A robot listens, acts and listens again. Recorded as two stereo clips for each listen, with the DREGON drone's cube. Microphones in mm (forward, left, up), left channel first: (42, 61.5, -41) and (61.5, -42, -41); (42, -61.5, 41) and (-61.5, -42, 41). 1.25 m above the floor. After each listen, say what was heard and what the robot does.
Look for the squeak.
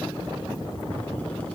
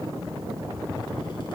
Keep listening.
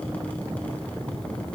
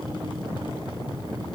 Keep listening.
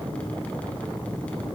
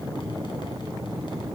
I can't make out a squeak.